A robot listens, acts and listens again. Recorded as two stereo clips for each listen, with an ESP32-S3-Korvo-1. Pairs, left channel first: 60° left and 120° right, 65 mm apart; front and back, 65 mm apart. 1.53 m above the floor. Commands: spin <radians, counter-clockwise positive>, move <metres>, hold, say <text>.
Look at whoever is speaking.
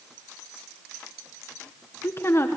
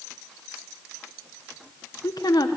spin 0.17
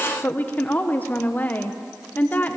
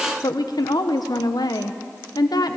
say Found it: a woman speaking, straight ahead.